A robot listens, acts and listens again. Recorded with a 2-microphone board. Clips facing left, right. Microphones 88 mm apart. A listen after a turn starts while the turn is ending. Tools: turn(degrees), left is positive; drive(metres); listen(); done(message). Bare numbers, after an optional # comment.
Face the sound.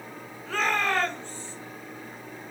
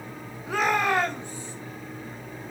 # The shout: about 15° right or 165° right.
turn(-15)
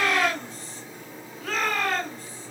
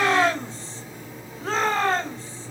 # So it is at 150° right.
turn(-150)
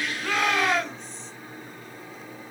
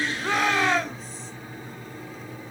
done("Found it: a shout, straight ahead.")